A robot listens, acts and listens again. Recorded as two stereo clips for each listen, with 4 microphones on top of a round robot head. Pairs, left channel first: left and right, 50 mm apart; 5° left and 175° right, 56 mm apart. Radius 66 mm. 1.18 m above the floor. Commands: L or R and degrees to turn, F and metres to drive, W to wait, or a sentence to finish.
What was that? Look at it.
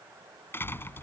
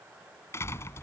L45
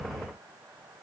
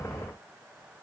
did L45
I heard a door slam from this way, but can't make it out now.